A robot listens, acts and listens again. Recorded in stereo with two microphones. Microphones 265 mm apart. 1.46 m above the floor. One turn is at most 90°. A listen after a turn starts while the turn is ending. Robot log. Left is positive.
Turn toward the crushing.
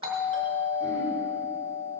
cmd idle
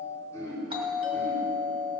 cmd idle
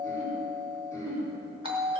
end: I can't make out crushing, only throat clearing and a doorbell.